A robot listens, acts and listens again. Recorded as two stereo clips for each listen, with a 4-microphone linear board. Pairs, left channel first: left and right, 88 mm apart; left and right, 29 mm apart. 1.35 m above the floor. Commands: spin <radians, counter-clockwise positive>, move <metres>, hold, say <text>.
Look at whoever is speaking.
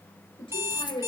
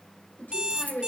spin 1.57
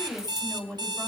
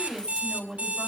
say Facing the woman speaking.